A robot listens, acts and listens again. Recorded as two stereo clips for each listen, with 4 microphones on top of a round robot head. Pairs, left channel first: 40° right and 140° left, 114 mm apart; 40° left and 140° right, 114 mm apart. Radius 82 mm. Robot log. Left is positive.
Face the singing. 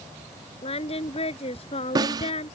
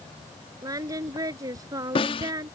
note: The singing: 80° right.
cmd yaw -80
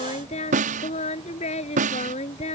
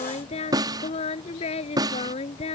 end: Found it: singing, straight ahead.